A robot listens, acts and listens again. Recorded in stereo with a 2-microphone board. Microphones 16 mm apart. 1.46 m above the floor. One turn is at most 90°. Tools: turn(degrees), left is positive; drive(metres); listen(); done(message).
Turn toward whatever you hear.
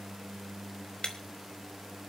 turn(degrees=60)
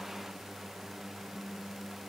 listen()
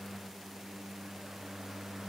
done("I heard breaking glass, but can't make it out now. It was about straight ahead or 60° left.")